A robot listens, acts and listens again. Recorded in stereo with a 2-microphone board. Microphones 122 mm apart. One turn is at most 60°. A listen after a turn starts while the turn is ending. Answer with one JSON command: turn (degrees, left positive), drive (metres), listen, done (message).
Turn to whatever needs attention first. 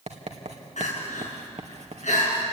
{"turn": 60}
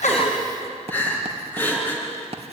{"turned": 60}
{"turn": 15}
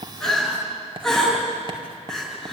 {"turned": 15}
{"done": "Found it: crying, straight ahead."}